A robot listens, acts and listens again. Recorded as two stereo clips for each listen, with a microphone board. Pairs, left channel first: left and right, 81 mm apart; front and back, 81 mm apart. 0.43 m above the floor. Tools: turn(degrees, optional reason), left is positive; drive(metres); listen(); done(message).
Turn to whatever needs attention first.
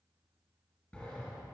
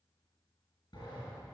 listen()
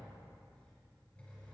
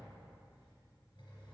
listen()
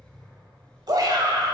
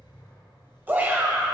turn(degrees=-115, reason="The shout: 115° right.")
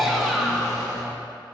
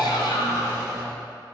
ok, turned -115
done("Facing the shout, 1 to 2 m away.")